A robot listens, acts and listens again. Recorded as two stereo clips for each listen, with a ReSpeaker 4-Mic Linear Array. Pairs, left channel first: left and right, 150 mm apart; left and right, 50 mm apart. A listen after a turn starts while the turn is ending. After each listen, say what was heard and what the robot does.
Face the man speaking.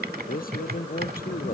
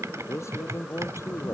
The man speaking: about 65° left or 115° left. Turn 65° left.
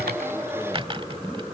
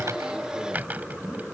Keep listening.
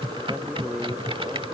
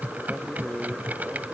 Facing the man speaking.